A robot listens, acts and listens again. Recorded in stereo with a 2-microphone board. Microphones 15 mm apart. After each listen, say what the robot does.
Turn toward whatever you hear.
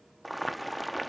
Turn 30° left.
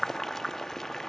Turn 145° left.
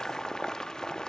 Turn 60° left.
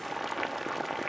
Found it: boiling, straight ahead.